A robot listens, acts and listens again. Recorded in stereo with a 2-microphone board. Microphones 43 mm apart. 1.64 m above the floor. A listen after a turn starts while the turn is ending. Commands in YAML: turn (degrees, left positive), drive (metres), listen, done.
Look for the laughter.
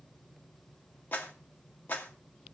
listen: true
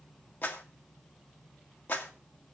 listen: true
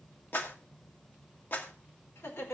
turn: 90
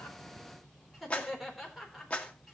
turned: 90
done: "Facing the laughter, over 4 m away."